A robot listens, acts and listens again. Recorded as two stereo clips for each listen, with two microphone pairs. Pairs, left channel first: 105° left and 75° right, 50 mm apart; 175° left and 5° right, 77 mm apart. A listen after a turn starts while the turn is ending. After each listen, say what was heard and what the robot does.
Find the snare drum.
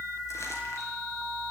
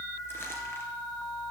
Keep listening.
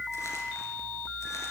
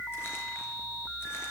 Keep listening.
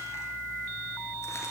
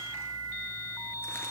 I can't make out a snare drum.